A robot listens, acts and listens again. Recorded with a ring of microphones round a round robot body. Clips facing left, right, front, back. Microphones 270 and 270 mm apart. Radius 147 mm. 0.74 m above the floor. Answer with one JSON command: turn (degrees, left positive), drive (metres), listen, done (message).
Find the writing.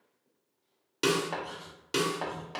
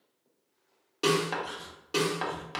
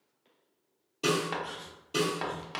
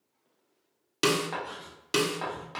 {"turn": -35}
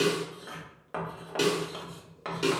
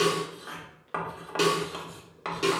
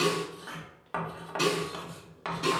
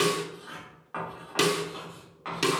{"turn": -10}
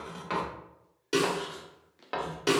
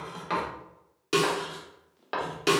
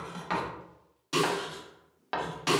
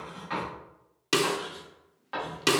{"done": "Found it: writing, straight ahead."}